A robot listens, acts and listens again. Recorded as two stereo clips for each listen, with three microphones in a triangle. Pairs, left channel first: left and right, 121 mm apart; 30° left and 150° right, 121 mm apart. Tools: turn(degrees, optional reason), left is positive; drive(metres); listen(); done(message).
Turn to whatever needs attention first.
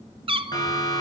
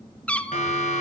turn(degrees=35, reason="The siren: 35° left.")
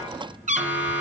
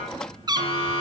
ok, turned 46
turn(degrees=-10, reason="The siren is now 10° right.")
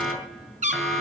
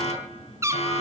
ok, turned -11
done("Found it: a siren, straight ahead, over 4 m away.")